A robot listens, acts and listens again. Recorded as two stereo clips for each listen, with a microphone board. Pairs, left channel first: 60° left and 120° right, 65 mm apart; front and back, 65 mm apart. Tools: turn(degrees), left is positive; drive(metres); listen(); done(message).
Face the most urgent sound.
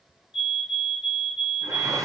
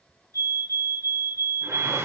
turn(degrees=170)
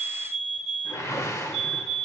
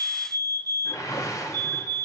turn(degrees=-25)
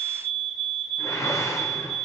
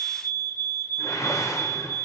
turn(degrees=-25)
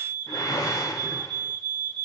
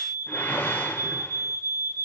done("Found it: a fire alarm, straight ahead.")